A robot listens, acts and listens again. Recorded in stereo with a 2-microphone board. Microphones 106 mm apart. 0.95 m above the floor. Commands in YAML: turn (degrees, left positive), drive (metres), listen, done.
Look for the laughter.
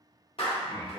turn: -40
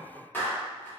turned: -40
listen: true
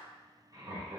turn: -35
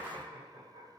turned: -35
turn: -130
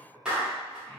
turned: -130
turn: 15
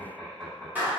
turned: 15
done: "Found it: laughter, straight ahead, 2 to 4 m away."